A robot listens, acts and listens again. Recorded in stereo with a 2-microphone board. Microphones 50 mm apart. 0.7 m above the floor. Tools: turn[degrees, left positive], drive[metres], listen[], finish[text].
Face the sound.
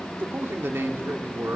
Thought: The man speaking: about 60° right or 120° right.
Action: turn[-60]
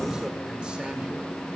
Action: listen[]
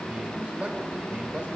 Thought: So it is at 30° right.
Action: turn[-30]
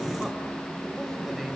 Action: finish[Facing the man speaking, over 4 m away.]